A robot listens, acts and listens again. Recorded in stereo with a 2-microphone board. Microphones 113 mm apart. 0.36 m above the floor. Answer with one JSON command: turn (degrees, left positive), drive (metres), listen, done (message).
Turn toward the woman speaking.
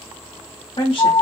{"turn": 55}
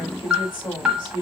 {"turn": 50}
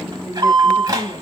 {"turn": 15}
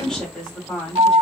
{"done": "Found it: a woman speaking, straight ahead, 1 to 2 m away."}